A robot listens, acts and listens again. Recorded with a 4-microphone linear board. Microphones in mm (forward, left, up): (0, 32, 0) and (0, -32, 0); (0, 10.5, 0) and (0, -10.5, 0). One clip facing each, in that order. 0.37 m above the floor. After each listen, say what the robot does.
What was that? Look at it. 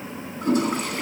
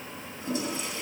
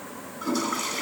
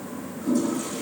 Turn 60° left.
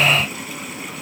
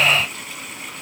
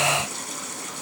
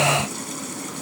Keep listening.
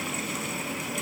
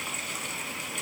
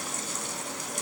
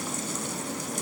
Keep listening.
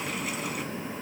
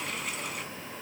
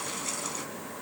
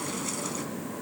I heard a toilet flushing, but can't make it out now. It was about straight ahead or 60° left.